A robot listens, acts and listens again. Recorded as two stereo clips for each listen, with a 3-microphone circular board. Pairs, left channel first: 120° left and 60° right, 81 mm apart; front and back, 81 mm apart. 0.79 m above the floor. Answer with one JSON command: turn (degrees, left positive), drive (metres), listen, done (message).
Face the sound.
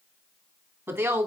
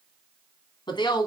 {"done": "Found it: a woman speaking, straight ahead, 2 to 4 m away."}